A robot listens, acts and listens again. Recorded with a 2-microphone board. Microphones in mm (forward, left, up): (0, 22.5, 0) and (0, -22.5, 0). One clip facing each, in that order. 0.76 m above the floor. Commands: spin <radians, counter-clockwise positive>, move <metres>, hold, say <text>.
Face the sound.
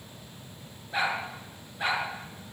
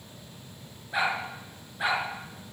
spin -0.52
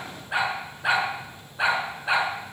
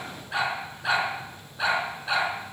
spin 0.35
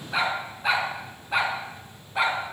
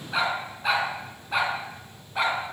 say Found it: a dog barking, straight ahead.